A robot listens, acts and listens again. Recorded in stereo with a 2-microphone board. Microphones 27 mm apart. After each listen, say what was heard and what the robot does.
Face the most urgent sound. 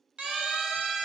The siren: about 45° right or 135° right. Turn 45° right.
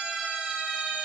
So it is at 95° right. Turn 95° right.
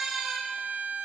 The siren is now 20° right. Turn 20° right.
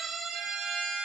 Facing the siren, over 4 m away.